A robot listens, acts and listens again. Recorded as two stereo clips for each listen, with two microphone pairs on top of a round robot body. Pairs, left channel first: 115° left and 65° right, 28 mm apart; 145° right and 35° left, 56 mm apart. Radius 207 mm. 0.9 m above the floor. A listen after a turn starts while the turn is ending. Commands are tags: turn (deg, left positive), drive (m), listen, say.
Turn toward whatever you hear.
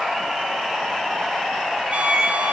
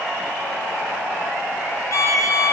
<turn deg="-105"/>
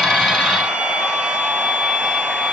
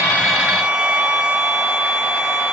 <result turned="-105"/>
<turn deg="-40"/>
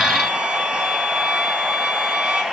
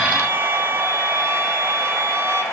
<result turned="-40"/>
<turn deg="-15"/>
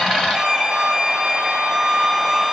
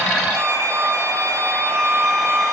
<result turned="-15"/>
<say>Found it: a violin, straight ahead.</say>